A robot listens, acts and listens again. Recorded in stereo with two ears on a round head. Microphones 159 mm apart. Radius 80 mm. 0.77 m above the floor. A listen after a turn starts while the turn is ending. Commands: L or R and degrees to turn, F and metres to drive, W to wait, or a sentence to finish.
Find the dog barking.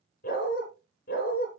L55
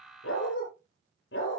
L70
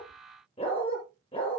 L30
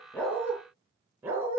R10
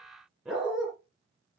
Found it: a dog barking, straight ahead, over 4 m away.